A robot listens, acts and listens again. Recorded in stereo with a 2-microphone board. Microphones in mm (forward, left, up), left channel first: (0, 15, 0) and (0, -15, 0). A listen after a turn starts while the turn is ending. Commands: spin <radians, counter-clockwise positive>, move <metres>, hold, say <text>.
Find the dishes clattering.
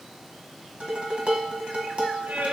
spin -0.70
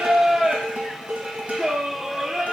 spin -1.66
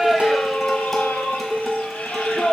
say Found it: dishes clattering, straight ahead, 1 to 2 m away.